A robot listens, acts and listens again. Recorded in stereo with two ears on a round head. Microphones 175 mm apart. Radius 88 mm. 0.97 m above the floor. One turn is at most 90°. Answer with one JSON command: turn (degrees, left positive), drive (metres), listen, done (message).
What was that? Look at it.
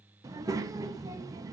{"turn": -15}
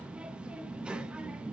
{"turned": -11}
{"done": "Found it: a child speaking, straight ahead, under 1 m away."}